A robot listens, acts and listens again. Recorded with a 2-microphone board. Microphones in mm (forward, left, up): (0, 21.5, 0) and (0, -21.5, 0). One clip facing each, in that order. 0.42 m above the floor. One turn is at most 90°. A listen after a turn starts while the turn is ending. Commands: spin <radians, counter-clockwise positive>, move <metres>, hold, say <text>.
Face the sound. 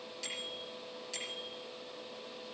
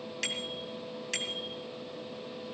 spin -1.57
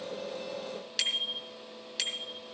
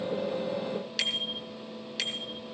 say Facing the bicycle bell.